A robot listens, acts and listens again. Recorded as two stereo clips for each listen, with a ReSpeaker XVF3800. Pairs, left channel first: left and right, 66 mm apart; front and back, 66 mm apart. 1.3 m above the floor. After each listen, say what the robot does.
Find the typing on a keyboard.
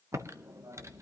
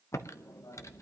Turn 45° right.
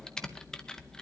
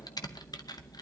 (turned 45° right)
Turn 10° left.
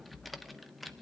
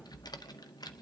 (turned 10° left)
Facing the typing on a keyboard, under 1 m away.